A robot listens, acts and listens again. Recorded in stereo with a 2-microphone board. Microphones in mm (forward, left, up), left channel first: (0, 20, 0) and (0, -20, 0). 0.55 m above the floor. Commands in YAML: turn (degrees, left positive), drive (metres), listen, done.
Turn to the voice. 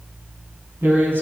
turn: -60
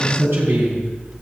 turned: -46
turn: -75
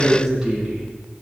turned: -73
turn: -15
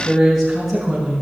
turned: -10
turn: -10
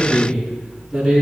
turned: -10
done: "Found it: a man speaking, straight ahead, over 4 m away."